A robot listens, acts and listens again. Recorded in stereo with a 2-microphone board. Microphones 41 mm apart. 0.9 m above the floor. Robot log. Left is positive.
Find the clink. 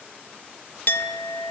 note: The clink: about 50° left or 130° left.
cmd yaw +50
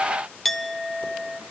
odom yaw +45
end: Facing the clink.